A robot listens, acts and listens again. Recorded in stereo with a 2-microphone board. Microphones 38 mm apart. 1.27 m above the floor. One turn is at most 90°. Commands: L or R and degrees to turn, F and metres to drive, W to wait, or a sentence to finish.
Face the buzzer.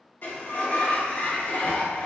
W
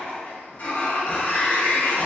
W
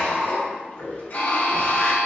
L50
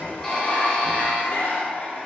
W
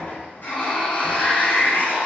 W
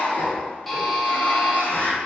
Facing the buzzer, under 1 m away.